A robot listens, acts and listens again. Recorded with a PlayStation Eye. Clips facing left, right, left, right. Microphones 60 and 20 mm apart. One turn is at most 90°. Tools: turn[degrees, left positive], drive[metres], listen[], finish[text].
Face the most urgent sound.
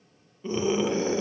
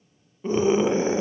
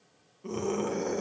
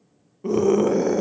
Thought: The scream: about 25° right or 155° right.
Action: turn[-25]
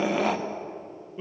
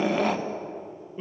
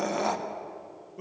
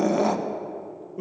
Action: finish[Facing the scream, under 1 m away.]